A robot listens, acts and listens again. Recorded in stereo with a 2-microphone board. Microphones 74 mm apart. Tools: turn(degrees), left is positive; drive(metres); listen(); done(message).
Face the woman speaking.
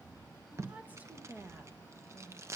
turn(degrees=-30)
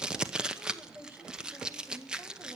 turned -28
turn(degrees=-35)
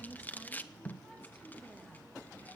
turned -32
done("Found it: a woman speaking, straight ahead, 2 to 4 m away.")